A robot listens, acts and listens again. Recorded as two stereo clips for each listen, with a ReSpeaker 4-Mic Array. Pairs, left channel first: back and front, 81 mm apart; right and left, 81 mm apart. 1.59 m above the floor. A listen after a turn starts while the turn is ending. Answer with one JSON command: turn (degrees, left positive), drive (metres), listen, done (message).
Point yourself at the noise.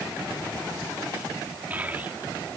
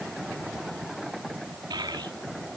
{"turn": 70}
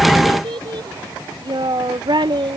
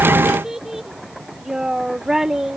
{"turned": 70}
{"done": "Facing the child speaking."}